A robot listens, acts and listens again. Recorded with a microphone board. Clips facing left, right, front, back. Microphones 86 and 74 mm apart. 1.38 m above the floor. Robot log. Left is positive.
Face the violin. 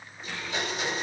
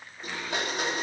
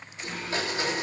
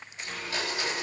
cmd idle
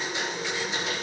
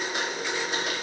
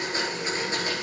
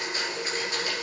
cmd idle
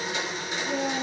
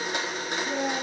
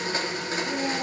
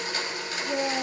end: I can't make out a violin to turn to.